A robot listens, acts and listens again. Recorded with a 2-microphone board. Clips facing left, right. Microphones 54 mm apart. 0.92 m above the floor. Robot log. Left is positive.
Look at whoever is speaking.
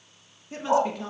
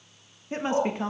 note: The woman speaking: about 35° right or 145° right.
cmd yaw -35
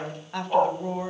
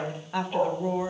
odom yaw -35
end: Facing the woman speaking, 1 to 2 m away.